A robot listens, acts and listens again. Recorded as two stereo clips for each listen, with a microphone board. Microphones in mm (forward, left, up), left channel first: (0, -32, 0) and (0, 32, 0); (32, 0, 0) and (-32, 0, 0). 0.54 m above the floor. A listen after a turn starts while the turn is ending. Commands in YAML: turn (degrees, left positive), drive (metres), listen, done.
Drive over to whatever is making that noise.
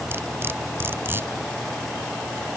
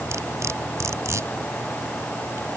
turn: 140
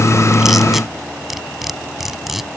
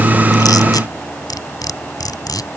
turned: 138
drive: 1.0
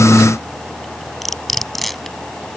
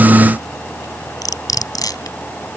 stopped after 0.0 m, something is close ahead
done: "Blocked. The cutlery clinking is further on, straight ahead."